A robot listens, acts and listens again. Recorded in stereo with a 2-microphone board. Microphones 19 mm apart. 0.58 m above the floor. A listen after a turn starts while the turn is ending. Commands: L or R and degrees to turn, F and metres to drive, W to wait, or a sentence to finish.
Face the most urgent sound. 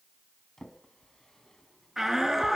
R20
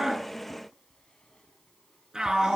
R135
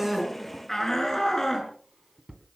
L25
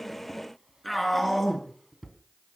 L10
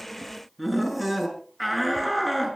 Facing the shout.